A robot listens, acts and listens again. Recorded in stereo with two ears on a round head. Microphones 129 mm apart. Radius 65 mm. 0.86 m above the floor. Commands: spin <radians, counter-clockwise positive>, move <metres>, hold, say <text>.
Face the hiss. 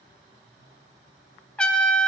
hold
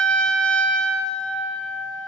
hold
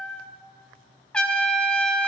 say I can't make out a hiss, only a trumpet.